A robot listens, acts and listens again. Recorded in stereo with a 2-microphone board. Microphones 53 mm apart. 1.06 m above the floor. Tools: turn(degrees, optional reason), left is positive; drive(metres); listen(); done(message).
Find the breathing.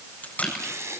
turn(degrees=-70, reason="The breathing: about 70° right or 110° right.")
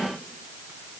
listen()
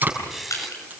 done("Found it: breathing, straight ahead, 2 to 4 m away.")